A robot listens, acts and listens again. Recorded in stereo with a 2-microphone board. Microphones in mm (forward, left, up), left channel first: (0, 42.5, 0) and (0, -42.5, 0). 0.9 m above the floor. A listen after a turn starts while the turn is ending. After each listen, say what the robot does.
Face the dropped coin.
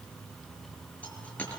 Turn 15° left.
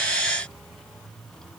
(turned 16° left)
Keep listening.
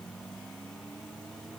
I heard a dropped coin, but can't make it out now. It was about straight ahead or 145° left.